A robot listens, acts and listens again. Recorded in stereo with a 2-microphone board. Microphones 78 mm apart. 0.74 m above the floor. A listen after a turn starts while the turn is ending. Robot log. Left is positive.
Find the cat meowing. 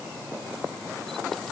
cmd idle
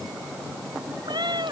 note: The cat meowing: about 65° right or 115° right.
cmd yaw -65
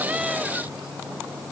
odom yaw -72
cmd idle
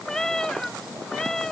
note: So it is at 10° left.
cmd yaw +10
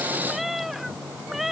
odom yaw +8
end: Found it: a cat meowing, straight ahead.